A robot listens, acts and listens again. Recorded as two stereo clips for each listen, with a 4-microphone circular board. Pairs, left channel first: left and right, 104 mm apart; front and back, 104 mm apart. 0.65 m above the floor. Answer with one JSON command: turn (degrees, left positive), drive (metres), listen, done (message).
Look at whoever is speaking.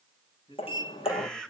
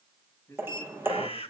{"turn": 60}
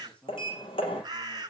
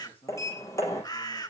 {"turn": 10}
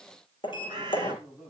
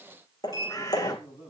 {"done": "Facing the man speaking, over 4 m away."}